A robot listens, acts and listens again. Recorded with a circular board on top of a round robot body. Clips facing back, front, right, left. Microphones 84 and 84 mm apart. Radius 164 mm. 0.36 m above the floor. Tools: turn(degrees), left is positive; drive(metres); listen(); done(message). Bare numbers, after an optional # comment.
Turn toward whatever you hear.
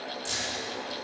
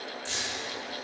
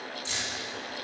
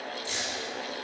# The keys jangling: 160° right.
turn(-160)
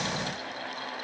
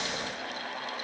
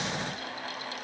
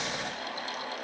listen()
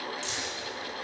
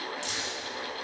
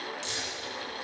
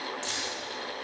# The keys jangling is now 35° left.
turn(35)
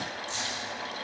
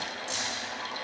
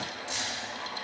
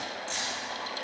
# The keys jangling is now 10° right.
turn(-10)
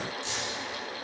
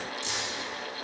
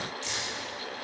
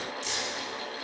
done("Found it: keys jangling, straight ahead.")